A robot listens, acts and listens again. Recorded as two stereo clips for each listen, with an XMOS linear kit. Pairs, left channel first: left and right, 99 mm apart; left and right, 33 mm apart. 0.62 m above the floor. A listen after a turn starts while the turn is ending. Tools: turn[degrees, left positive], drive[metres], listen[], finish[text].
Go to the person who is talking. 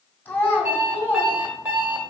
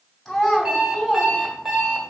Thought: The child speaking: about 20° left or 160° left.
Action: turn[20]
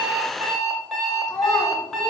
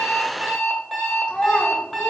Thought: So it is at 145° left.
Action: turn[145]
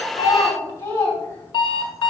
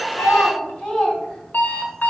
Thought: The child speaking is now 25° left.
Action: turn[25]
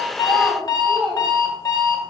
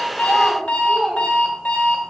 Action: drive[1.0]
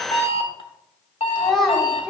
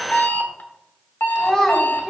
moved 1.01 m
Action: drive[1.0]
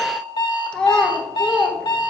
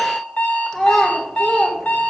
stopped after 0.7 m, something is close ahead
Thought: The child speaking is now 10° left.
Action: turn[10]
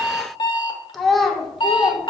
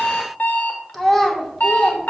Action: finish[Arrived at the child speaking, straight ahead.]